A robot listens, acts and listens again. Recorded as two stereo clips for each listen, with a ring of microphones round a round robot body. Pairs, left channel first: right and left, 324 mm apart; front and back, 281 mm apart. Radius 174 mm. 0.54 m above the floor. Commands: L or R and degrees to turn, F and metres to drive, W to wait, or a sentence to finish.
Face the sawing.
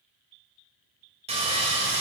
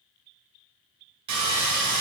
L160
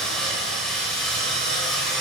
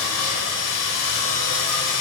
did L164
Facing the sawing, 1 to 2 m away.